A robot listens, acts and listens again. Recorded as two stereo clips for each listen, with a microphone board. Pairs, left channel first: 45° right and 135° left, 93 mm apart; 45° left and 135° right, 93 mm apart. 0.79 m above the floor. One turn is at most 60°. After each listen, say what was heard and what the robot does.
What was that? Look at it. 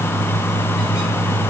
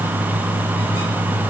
Keep listening.
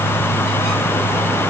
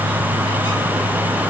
Keep listening.
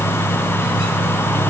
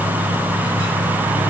I can't make out anything to turn to.